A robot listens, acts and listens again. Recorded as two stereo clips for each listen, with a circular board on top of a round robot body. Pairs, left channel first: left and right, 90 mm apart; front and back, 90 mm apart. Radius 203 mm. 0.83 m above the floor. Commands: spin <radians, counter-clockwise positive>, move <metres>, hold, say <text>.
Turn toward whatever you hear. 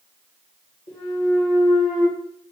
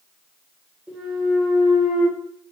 spin 1.83
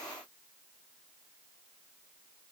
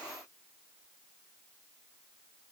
say Facing where the clunk came from. I can't hear it now.